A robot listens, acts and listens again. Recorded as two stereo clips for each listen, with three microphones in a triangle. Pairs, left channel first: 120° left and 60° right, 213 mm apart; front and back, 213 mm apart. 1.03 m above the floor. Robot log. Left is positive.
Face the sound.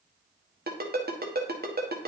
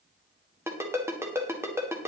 note: The ringtone: 100° right.
cmd yaw -100
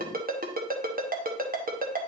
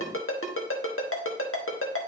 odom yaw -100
note: The ringtone is now 10° right.
cmd yaw -10
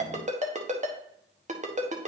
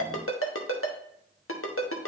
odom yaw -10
end: Found it: a ringtone, straight ahead.